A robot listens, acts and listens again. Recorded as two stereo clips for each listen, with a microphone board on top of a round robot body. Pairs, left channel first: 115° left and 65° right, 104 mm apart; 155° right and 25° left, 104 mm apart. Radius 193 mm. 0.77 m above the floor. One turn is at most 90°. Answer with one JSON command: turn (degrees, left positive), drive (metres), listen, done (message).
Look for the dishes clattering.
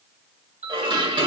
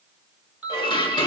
{"turn": -90}
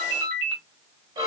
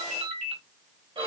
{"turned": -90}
{"turn": -20}
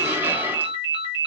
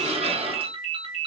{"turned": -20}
{"done": "Found it: dishes clattering, straight ahead."}